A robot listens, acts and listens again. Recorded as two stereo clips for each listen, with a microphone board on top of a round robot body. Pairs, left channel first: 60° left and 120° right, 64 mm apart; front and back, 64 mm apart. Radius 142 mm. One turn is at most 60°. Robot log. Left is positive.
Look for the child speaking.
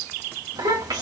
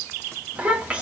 note: The child speaking: 105° right.
cmd yaw -60
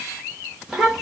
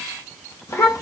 note: The child speaking is now 30° right.
cmd yaw -30
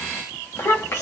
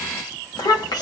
note: The child speaking is now 15° left.
cmd yaw +15
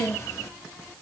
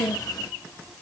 note: The child speaking is now 10° left.
cmd yaw +10
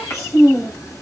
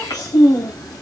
note: The child speaking is now 15° left.
cmd yaw +15
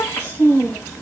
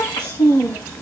end: Facing the child speaking, 2 to 4 m away.